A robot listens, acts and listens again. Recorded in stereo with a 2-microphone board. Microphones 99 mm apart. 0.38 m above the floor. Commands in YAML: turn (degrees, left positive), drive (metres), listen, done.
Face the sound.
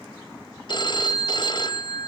turn: 50
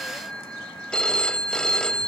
turn: 10
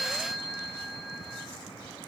done: "Facing the phone ringing, 1 to 2 m away."